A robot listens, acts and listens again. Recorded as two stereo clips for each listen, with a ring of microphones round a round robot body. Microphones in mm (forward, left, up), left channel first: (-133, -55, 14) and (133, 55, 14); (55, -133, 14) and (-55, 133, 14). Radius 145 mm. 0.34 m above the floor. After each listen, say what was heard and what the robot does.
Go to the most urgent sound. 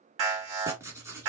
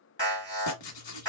The alarm: 10° left. Turn 10° left.
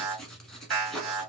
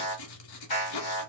Drive 1.0 m forward.
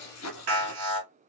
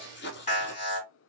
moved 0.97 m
Drive 1.0 m forward.
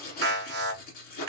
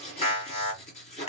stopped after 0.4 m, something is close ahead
Arrived at the alarm, straight ahead.